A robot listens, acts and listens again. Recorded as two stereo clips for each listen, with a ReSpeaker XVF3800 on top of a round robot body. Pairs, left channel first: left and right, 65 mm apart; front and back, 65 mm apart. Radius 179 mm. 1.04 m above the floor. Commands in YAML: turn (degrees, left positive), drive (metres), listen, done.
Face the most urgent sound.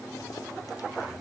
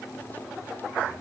listen: true
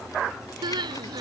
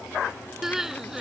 turn: -95
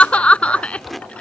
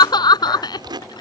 turn: 20
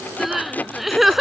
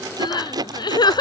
done: "Facing the crying."